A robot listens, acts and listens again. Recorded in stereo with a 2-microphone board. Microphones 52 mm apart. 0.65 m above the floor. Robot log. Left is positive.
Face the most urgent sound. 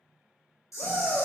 note: The shout: about 30° left or 150° left.
cmd yaw +30
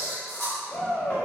note: So it is at 115° left.
cmd yaw +115
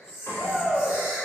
note: The shout is now 40° left.
cmd yaw +40
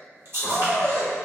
end: Found it: a shout, straight ahead.